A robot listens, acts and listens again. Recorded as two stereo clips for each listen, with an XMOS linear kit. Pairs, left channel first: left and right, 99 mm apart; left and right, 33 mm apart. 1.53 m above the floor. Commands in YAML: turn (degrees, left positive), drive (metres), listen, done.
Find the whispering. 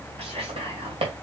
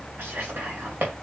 turn: -90
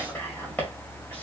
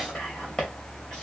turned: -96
turn: 15
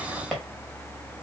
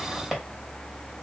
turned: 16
done: "Found it: whispering, straight ahead, 2 to 4 m away."